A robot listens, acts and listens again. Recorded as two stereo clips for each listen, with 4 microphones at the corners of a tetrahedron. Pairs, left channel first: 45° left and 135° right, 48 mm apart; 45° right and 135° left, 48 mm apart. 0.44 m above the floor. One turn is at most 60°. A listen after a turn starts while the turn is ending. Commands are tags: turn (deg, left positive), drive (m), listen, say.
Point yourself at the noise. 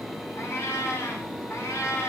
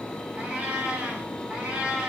<turn deg="60"/>
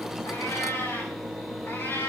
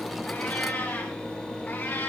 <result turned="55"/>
<say>Found it: a cat meowing, straight ahead.</say>